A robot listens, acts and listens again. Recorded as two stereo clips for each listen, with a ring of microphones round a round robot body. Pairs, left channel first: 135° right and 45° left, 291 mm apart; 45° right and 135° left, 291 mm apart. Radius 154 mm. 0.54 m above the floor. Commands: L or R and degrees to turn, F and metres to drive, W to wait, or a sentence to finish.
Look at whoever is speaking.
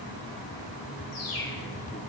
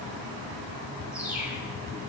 W
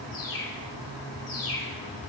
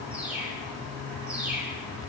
W
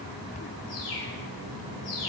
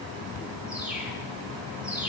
I can't make out anyone speaking, only a bird.